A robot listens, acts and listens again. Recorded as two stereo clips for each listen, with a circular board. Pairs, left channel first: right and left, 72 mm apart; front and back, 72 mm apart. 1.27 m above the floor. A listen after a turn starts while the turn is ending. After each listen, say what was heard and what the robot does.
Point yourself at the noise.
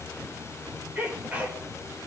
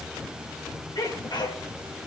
The sneeze: 20° left. Turn 20° left.
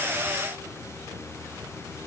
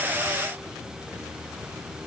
Facing where the sneeze came from. I can't hear it now.